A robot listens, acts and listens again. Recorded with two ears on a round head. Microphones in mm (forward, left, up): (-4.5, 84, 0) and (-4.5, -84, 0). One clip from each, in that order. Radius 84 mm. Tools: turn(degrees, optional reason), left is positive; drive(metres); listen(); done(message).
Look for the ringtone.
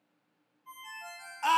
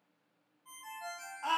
turn(degrees=-70, reason="The ringtone: about 70° right or 110° right.")
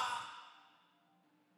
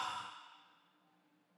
listen()
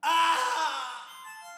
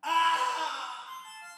done("Found it: a ringtone, straight ahead, 2 to 4 m away.")